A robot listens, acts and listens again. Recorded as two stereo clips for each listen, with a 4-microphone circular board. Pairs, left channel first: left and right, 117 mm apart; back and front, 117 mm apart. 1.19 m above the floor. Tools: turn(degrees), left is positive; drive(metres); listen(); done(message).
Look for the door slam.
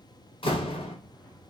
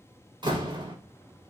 turn(degrees=50)
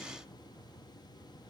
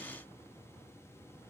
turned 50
done("Facing where the door slam came from. I can't hear it now.")